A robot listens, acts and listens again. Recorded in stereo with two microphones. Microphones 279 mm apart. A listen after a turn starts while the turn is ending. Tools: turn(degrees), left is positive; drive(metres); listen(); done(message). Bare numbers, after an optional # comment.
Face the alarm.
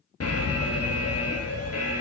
# The alarm: about 60° left or 120° left.
turn(60)
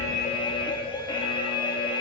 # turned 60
# So it is at 20° left.
turn(20)
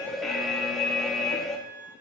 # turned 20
done("Found it: an alarm, straight ahead.")